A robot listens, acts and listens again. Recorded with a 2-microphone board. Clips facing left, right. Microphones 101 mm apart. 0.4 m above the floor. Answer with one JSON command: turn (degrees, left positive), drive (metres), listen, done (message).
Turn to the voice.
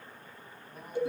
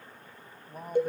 {"turn": -40}
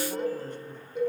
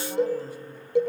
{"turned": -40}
{"listen": true}
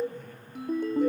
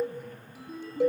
{"turn": -10}
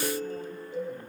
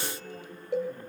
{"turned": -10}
{"listen": true}
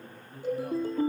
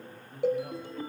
{"done": "Found it: a man speaking, straight ahead, 2 to 4 m away."}